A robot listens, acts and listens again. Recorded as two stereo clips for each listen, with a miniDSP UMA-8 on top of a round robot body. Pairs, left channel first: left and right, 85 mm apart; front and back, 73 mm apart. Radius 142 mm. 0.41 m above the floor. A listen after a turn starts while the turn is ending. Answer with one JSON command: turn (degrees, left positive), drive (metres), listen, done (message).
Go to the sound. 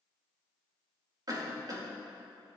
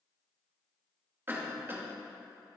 {"turn": -125}
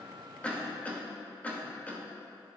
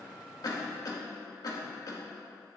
{"turn": 20}
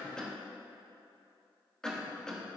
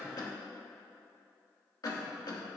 {"turn": 10}
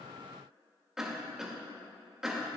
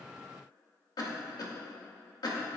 {"drive": 1.0}
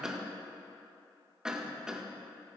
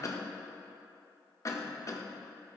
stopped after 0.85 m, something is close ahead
{"turn": -10}
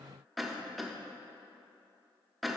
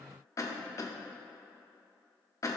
{"done": "Arrived at the cough, straight ahead."}